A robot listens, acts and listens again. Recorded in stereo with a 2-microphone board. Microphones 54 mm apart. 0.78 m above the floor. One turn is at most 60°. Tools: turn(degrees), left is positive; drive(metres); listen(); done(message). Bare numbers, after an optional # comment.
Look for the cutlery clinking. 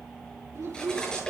# The cutlery clinking: about 20° left or 160° left.
turn(20)
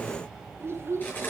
# So it is at 140° left.
turn(60)
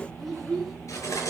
# The cutlery clinking is now 90° left.
turn(60)
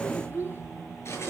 # The cutlery clinking is now 50° left.
turn(50)
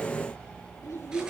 listen()
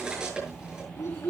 # The cutlery clinking is now 15° right.
turn(-15)
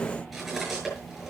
done("Facing the cutlery clinking, over 4 m away.")